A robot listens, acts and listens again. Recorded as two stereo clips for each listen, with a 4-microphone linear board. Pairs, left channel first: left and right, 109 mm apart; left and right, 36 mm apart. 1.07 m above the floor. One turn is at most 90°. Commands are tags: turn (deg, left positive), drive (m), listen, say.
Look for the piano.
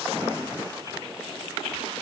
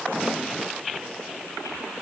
<listen/>
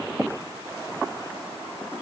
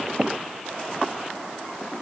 <listen/>
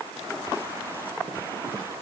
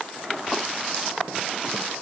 <say>I can't make out a piano to turn to.</say>